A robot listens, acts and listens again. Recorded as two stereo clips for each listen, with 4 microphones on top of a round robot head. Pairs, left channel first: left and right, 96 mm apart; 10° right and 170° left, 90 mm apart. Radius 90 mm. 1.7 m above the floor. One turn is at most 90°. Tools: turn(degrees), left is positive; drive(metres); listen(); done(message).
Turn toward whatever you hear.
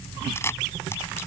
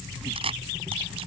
turn(degrees=90)
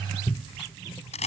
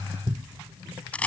turn(degrees=65)
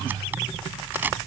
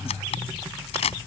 turn(degrees=-15)
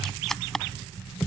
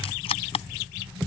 done("Facing the camera shutter.")